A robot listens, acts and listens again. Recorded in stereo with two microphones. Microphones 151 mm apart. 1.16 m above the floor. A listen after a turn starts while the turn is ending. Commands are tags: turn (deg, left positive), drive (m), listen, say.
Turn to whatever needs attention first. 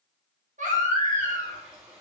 <turn deg="-55"/>
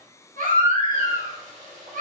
<turn deg="-70"/>
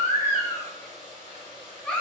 <say>Found it: a baby crying, straight ahead.</say>